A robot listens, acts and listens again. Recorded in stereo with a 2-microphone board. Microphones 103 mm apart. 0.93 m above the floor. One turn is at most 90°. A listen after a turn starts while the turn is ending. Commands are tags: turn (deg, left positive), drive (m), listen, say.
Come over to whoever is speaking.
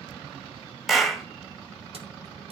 <listen/>
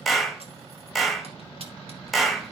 <listen/>
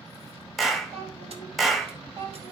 <turn deg="-60"/>
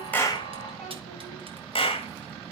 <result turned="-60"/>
<drive m="1.0"/>
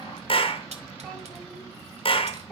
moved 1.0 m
<listen/>
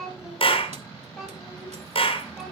<drive m="1.0"/>
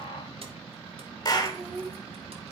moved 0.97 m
<drive m="1.0"/>
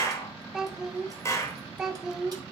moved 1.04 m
<drive m="1.0"/>
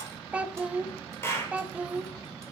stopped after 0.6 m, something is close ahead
<turn deg="-10"/>
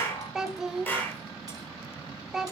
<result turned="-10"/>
<say>Arrived at the child speaking, straight ahead.</say>